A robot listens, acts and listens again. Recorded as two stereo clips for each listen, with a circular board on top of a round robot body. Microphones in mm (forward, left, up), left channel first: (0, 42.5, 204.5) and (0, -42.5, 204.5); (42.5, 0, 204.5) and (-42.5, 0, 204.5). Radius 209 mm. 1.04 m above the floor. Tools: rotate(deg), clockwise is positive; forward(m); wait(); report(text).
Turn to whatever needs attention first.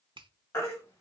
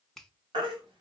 rotate(-150)
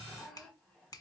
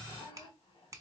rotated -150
wait()
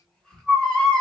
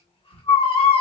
report("Facing the baby crying.")